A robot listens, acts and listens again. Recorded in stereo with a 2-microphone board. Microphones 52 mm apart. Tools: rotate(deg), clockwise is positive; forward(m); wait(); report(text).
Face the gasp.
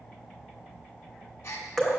rotate(-55)
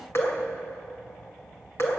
wait()
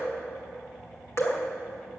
report("I heard a gasp, but can't make it out now. It was about straight ahead or 70° left.")